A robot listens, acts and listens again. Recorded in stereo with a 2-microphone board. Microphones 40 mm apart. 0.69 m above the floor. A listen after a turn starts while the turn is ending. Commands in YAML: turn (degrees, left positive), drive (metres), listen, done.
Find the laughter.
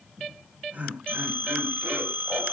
turn: -40
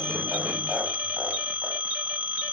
listen: true
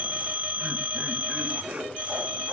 turn: -25
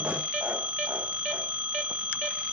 listen: true
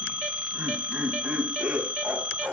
turn: -20
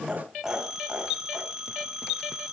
done: "Found it: laughter, straight ahead, over 4 m away."